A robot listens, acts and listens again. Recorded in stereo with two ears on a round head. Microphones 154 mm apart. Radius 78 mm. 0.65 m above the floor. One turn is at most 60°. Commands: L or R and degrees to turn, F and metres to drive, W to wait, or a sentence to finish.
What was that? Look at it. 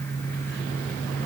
W
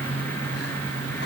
W
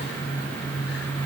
I can't make out anything to turn to.